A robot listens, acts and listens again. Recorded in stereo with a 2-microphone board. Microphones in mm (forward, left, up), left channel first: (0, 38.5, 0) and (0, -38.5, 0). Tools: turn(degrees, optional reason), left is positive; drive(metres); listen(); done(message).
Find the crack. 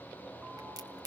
turn(degrees=-60, reason="The crack: about 60° right or 120° right.")
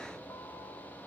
listen()
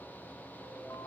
done("I heard a crack, but can't make it out now. It was about straight ahead or 60° right.")